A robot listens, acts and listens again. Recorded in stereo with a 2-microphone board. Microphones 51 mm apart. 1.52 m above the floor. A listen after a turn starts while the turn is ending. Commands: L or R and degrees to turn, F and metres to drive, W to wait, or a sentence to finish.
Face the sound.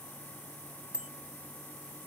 R20
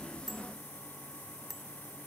Facing the bicycle bell.